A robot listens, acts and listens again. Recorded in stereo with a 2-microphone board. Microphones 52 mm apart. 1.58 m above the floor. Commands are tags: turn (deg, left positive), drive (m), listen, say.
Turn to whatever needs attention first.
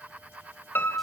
<listen/>
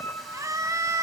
<turn deg="-90"/>
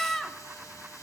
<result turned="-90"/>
<say>Facing the scream, 2 to 4 m away.</say>